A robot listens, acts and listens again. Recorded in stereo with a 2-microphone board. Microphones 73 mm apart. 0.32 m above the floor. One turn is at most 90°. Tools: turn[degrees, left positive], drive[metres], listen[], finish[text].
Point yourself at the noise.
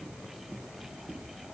Action: listen[]
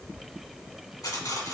Thought: The cutlery clinking: about 50° left or 130° left.
Action: turn[50]
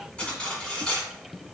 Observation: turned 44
Thought: So it is at 10° left.
Action: turn[10]
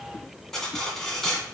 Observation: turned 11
Action: finish[Facing the cutlery clinking, 1 to 2 m away.]